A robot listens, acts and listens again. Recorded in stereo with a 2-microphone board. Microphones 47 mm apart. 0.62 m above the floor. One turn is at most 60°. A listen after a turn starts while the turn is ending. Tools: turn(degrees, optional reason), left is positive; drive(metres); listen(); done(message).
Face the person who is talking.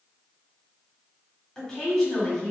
turn(degrees=30)
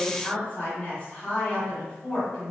turn(degrees=60, reason="So it is at 135° left.")
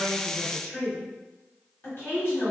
turn(degrees=60, reason="The woman speaking is now 65° left.")
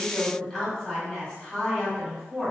turn(degrees=15, reason="The woman speaking is now 15° left.")
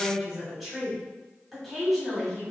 done("Facing the woman speaking, 1 to 2 m away.")